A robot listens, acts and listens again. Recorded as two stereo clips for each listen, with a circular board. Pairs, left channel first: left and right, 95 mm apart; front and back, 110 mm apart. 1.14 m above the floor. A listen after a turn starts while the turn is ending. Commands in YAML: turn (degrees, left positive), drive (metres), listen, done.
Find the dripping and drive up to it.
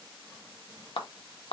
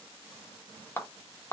listen: true
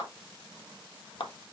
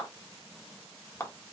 listen: true
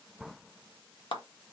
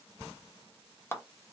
done: "I can't make out dripping to turn to."